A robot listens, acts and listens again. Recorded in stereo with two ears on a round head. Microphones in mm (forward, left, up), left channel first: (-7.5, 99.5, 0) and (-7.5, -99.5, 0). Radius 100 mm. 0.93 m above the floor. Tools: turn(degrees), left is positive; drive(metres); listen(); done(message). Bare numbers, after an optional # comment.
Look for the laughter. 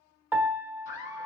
# The laughter: about 35° left or 145° left.
turn(35)
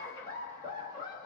# So it is at 20° left.
turn(20)
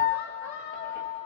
# The laughter is now 15° left.
turn(15)
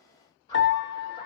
# The laughter is now 30° left.
turn(30)
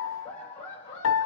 # The laughter is now 30° left.
turn(30)
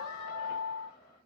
listen()
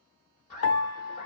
# The laughter is now 20° left.
turn(20)
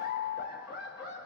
done("Facing the laughter.")